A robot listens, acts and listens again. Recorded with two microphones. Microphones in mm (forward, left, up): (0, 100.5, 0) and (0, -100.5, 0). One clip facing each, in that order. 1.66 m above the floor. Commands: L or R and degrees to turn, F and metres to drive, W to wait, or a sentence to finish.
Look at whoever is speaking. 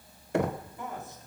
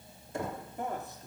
R55
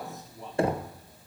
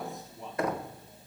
Facing the man speaking, 2 to 4 m away.